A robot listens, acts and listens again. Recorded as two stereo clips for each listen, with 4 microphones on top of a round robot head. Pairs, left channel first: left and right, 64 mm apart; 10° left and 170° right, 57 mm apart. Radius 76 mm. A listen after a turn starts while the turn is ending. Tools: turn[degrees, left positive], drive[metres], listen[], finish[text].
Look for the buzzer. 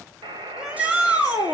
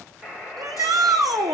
Thought: The buzzer: 85° right.
Action: turn[-85]
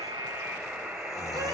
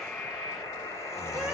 Thought: The buzzer is now 15° right.
Action: turn[-15]
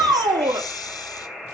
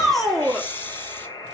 Action: finish[Found it: a buzzer, straight ahead.]